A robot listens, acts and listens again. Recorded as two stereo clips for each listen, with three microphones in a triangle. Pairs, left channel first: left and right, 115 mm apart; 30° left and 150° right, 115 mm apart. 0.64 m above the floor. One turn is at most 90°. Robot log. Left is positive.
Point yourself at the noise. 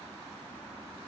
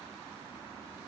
cmd idle
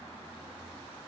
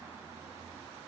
cmd idle
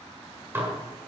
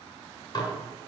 note: The dishes clattering: 20° right.
cmd yaw -20
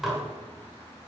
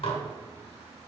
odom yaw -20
end: Found it: dishes clattering, straight ahead, 1 to 2 m away.